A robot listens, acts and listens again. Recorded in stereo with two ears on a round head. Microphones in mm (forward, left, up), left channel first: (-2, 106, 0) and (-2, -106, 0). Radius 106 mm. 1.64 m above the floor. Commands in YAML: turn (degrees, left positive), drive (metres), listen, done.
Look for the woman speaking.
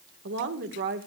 turn: -45
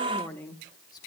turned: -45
turn: 10
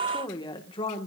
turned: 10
turn: 25
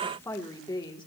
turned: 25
turn: 20
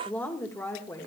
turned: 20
turn: 15
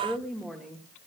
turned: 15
done: "Found it: a woman speaking, straight ahead."